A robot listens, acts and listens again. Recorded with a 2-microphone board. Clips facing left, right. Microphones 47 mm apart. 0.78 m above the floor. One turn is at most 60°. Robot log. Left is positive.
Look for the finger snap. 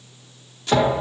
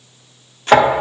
cmd idle
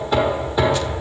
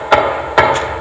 cmd idle
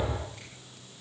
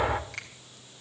note: The finger snap: about 75° right or 105° right.
cmd yaw -60
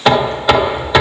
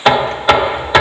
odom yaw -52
cmd idle
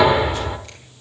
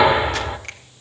cmd idle
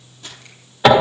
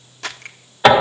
note: So it is at 55° right.
cmd yaw -55
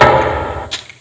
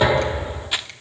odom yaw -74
note: Nothing new. It was at 20° left.
cmd yaw +20
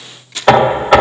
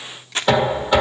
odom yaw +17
cmd idle
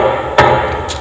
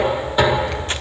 end: I heard a finger snap from this way, but can't make it out now.